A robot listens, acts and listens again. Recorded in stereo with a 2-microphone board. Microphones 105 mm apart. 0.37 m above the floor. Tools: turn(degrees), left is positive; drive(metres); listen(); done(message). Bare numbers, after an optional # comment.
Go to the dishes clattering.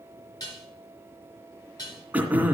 # The dishes clattering: about 35° left or 145° left.
turn(35)
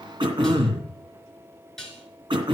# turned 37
drive(1.0)
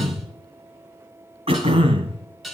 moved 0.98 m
drive(1.0)
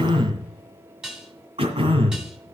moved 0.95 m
drive(1.0)
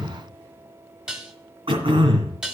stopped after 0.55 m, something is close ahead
# The dishes clattering is now 10° right.
turn(-10)
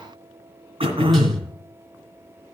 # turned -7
listen()
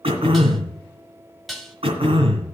done("Arrived at the dishes clattering, straight ahead.")